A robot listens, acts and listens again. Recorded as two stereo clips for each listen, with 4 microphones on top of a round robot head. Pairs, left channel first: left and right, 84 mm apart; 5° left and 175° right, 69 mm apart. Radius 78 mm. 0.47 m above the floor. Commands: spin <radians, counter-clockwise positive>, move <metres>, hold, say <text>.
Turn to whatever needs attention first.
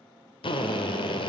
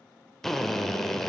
hold
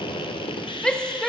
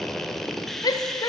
spin 0.17
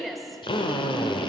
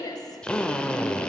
say Facing the shout.